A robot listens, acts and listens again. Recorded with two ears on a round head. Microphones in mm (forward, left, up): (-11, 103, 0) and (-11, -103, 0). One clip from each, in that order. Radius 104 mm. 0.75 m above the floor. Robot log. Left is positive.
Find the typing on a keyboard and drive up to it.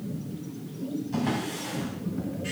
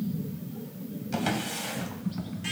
note: The typing on a keyboard: about 40° right or 140° right.
cmd yaw -40
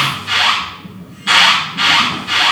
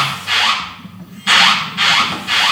note: So it is at 100° right.
cmd yaw -100
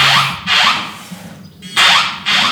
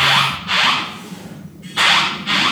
note: The typing on a keyboard is now 10° right.
cmd yaw -10
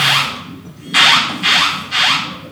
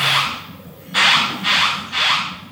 cmd fwd 1.0
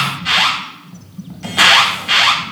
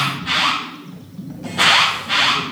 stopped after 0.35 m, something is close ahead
end: Blocked. The typing on a keyboard is further on, straight ahead.